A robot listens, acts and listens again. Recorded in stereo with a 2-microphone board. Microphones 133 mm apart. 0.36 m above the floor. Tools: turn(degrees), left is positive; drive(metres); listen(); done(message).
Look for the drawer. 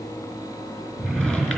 turn(degrees=30)
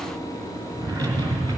turn(degrees=-25)
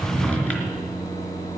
turn(degrees=10)
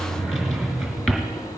done("Facing the drawer.")